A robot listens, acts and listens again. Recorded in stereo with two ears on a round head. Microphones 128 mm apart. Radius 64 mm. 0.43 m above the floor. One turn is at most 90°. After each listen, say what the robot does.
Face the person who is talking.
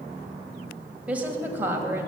Turn 15° right.
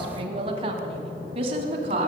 Turn 45° right.
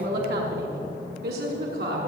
Turn 90° right.
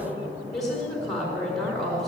Facing the woman speaking.